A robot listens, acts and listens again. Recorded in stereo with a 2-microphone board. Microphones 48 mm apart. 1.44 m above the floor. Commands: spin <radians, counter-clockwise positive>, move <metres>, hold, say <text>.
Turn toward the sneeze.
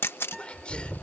spin 0.44
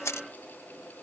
hold
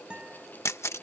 say I heard a sneeze, but can't make it out now. It was about straight ahead or 130° left.